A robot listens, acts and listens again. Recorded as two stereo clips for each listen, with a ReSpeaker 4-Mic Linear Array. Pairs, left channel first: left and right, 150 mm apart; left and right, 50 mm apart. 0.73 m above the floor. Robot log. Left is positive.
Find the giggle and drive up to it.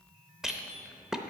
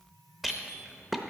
cmd idle
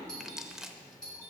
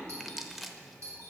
cmd idle
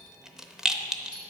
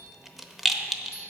end: I can't make out a giggle to turn to.